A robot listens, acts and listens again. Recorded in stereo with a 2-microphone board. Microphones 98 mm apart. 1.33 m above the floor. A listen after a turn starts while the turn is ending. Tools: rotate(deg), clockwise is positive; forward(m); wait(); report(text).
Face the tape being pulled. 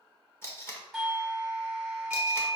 rotate(-25)
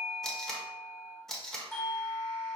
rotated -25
report("Found it: tape being pulled, straight ahead, under 1 m away.")